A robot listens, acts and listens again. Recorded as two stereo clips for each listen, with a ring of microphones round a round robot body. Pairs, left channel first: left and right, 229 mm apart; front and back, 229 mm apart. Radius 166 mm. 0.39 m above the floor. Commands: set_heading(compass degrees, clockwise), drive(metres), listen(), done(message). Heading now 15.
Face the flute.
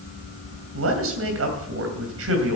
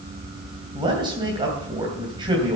listen()
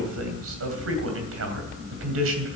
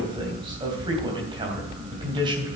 listen()
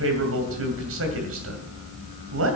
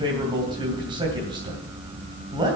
done("I can't make out a flute to turn to.")